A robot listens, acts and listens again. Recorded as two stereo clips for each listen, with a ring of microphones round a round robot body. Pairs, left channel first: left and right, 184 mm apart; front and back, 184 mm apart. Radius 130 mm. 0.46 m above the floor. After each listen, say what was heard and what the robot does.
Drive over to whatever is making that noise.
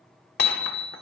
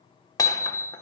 The hammering: 70° left. Turn 70° left.
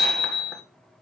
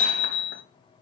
Drive 1.0 m forward.
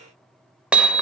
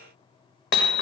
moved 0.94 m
Drive 1.0 m forward.
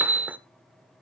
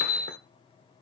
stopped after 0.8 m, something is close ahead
The hammering is now 15° right. Turn 15° right.
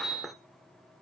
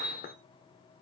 I am next to the hammering.